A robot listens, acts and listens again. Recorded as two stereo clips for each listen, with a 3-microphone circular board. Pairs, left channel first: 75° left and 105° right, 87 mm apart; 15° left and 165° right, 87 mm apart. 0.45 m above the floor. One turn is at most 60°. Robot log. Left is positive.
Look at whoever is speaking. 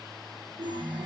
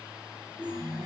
cmd idle
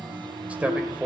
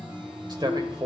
note: The man speaking: 175° right.
cmd yaw -60
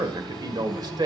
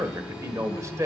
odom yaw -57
note: The man speaking is now 120° right.
cmd yaw -60
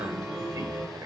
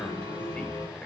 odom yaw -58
note: Nothing new. It was at 65° right.
cmd yaw -60
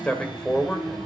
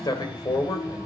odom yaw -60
end: Found it: a man speaking, straight ahead, 1 to 2 m away.